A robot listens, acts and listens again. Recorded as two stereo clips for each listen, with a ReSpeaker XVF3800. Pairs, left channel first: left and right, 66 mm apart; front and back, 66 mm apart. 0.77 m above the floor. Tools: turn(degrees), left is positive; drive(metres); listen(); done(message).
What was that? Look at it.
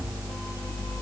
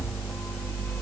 listen()
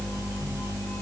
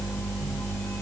listen()
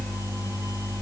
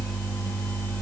done("I can't make out anything to turn to.")